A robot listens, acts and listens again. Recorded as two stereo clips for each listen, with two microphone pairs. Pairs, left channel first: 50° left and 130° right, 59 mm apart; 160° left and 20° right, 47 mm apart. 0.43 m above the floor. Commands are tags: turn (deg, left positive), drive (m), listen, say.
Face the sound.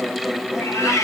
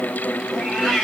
<turn deg="85"/>
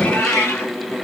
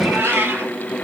<turn deg="10"/>
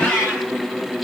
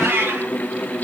<say>Facing the cat meowing, over 4 m away.</say>